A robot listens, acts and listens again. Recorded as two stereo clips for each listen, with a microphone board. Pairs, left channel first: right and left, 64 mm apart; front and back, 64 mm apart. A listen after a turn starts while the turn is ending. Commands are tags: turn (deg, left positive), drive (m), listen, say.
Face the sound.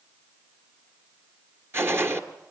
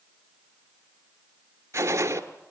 <turn deg="140"/>
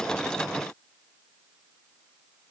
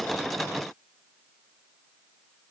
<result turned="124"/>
<turn deg="15"/>
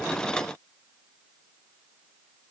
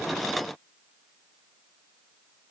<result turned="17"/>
<say>I heard a gunshot from this way, but can't make it out now.</say>